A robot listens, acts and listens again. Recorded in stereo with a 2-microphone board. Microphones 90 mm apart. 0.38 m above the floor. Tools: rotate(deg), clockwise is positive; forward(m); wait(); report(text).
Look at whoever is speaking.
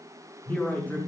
rotate(-20)
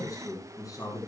rotate(-140)
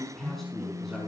report("Facing the man speaking, over 4 m away.")